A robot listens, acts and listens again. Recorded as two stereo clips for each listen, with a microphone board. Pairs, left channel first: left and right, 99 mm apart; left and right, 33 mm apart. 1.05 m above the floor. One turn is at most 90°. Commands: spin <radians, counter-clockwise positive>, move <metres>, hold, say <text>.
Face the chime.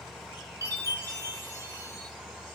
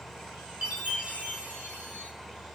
spin -0.61
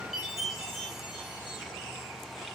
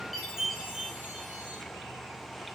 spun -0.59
say Found it: a chime, straight ahead, 1 to 2 m away.